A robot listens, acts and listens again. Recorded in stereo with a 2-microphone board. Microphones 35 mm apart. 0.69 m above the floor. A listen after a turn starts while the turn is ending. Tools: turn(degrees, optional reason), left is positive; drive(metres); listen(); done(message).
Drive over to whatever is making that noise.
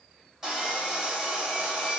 turn(degrees=-30)
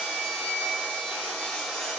turn(degrees=20, reason="So it is at 20° left.")
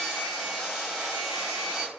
drive(metres=1.0)
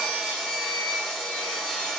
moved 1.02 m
turn(degrees=15, reason="The sawing is now 15° left.")
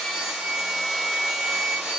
drive(metres=1.0)
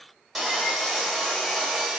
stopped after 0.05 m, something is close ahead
done("I am next to the sawing.")